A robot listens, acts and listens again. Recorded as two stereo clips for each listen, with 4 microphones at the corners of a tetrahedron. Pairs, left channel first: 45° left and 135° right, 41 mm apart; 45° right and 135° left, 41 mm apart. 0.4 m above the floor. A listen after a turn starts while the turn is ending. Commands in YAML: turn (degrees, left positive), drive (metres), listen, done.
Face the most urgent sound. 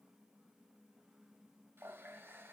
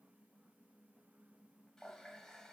listen: true
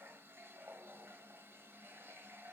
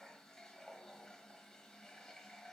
listen: true
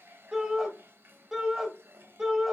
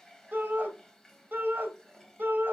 turn: 150
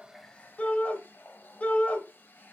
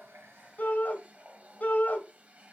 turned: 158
done: "Found it: a shout, straight ahead, 1 to 2 m away."